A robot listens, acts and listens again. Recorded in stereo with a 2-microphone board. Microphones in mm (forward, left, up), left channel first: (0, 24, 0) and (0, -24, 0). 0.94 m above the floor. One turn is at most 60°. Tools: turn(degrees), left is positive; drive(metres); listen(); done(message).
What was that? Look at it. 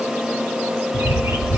turn(degrees=-60)
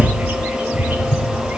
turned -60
turn(degrees=-30)
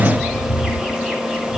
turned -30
done("Facing the bird.")